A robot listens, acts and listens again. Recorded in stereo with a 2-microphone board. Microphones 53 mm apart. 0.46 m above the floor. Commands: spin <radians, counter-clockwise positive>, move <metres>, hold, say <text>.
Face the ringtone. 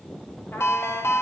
spin 0.96
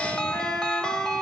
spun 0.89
spin 0.26
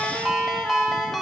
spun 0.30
say Found it: a ringtone, straight ahead, under 1 m away.